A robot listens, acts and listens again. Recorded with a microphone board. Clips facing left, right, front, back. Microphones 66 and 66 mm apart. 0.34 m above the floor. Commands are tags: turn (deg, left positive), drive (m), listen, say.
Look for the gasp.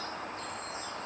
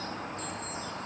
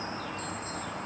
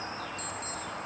<listen/>
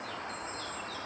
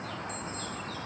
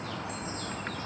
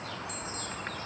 <listen/>
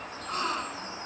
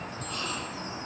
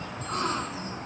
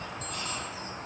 <turn deg="45"/>
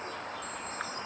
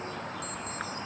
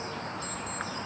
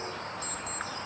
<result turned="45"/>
<say>I heard a gasp from this way, but can't make it out now.</say>